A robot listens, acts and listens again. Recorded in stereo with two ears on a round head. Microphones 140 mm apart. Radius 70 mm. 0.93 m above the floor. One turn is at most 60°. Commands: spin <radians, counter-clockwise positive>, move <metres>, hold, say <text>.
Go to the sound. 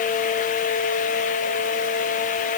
hold
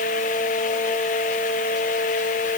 hold
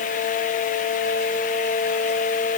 say I can't make out anything to turn to.